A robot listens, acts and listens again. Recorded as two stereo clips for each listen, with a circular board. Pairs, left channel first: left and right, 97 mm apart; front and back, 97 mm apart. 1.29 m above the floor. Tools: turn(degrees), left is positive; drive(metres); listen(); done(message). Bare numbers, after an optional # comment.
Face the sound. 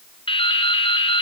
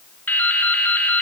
# The dripping: 70° left.
turn(70)
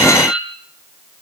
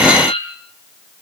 done("Facing the dripping.")